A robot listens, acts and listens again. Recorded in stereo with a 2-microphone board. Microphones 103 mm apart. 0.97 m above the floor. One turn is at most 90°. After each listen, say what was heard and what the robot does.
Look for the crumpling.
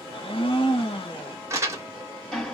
The crumpling: about 30° right or 150° right. Turn 30° right.
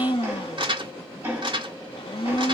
So it is at 120° right. Turn 90° right.
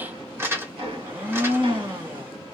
The crumpling is now 25° right. Turn 25° right.
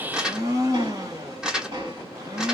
The crumpling is now 10° right. Turn 10° right.
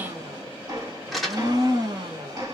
Facing the crumpling.